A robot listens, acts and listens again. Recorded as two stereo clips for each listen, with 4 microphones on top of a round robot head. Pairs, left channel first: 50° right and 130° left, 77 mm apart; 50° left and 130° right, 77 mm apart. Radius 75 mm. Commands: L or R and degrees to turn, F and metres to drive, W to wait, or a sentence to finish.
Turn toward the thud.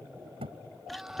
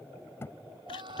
L115
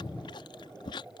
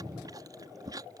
Facing where the thud came from. I can't hear it now.